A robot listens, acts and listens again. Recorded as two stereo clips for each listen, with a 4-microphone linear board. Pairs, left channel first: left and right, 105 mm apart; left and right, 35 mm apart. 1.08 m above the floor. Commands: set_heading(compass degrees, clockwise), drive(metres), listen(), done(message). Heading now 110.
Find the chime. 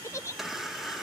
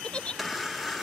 set_heading(80)
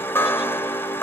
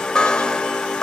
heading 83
set_heading(288)
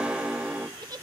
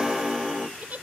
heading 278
set_heading(288)
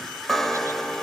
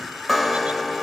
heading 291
done("Facing the chime, 1 to 2 m away.")